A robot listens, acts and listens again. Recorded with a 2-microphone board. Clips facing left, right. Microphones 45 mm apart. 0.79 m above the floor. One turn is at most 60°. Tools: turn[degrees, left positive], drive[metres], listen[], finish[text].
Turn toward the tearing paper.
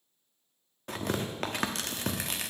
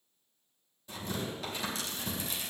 Thought: The tearing paper: about 60° left or 120° left.
Action: turn[60]
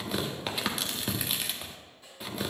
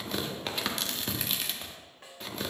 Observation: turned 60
Action: finish[Found it: tearing paper, straight ahead, under 1 m away.]